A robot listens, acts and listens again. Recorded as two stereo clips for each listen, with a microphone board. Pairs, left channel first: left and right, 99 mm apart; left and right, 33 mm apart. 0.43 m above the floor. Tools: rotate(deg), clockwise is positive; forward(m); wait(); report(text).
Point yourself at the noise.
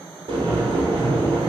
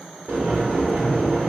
rotate(65)
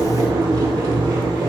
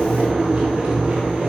rotate(45)
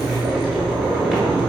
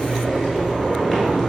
report("Facing the boiling.")